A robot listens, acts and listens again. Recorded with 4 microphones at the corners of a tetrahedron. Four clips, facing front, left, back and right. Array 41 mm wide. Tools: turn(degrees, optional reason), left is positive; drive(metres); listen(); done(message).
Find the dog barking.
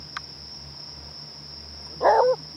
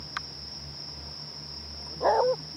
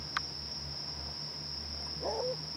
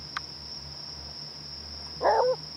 done("Facing the dog barking.")